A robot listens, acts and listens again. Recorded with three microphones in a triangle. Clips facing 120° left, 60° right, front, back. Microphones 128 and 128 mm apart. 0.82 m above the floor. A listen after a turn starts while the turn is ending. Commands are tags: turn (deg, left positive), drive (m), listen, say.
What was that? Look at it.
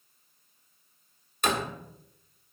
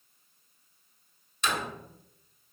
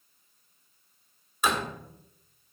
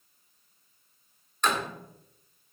<turn deg="80"/>
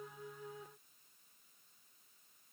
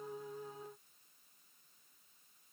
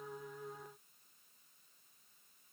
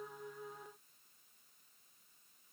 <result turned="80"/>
<say>I heard a door slam from this way, but can't make it out now.</say>